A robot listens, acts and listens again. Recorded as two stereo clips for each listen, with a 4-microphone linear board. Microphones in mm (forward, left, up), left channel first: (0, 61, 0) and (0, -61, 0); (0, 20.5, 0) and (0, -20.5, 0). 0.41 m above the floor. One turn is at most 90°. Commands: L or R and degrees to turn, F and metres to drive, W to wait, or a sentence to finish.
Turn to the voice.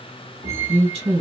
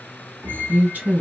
R55
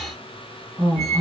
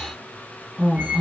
R15
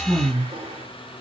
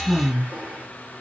Found it: a woman speaking, straight ahead, 1 to 2 m away.